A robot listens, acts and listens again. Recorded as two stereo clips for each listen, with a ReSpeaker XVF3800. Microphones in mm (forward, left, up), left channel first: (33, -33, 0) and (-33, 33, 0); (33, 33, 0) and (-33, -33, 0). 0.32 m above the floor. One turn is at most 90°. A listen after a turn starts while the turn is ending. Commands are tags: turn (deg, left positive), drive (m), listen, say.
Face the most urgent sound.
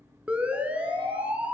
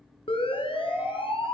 <turn deg="60"/>
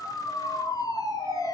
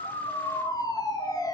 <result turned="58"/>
<say>Found it: a siren, straight ahead.</say>